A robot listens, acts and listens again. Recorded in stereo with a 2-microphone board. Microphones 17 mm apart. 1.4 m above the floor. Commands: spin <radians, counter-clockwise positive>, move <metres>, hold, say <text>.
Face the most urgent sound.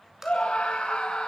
spin 1.57
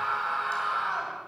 say Found it: a scream, straight ahead.